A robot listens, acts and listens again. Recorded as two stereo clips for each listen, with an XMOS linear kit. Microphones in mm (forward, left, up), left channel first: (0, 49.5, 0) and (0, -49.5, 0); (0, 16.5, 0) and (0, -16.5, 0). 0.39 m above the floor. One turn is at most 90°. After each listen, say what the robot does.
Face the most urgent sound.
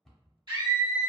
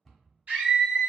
Turn 50° right.
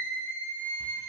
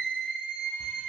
Turn 20° right.
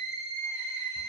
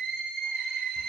Found it: a scream, straight ahead, 1 to 2 m away.